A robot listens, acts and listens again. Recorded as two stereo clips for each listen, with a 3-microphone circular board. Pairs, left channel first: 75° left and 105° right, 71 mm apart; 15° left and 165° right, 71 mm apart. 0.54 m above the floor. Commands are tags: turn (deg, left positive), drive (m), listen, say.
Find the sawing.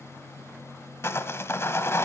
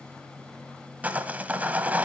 <turn deg="125"/>
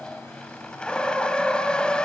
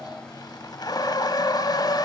<say>Facing the sawing, 1 to 2 m away.</say>